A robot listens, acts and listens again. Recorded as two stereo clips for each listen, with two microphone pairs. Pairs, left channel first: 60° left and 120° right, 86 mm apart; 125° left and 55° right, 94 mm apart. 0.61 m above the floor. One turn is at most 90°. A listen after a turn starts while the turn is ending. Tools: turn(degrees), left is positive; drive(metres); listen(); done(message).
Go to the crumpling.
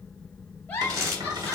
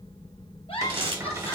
turn(degrees=-70)
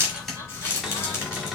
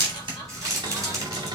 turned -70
drive(metres=1.0)
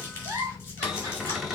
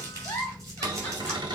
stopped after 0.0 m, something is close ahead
listen()
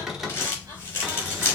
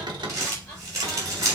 done("Something is in my way. I am facing the crumpling but have not reached it.")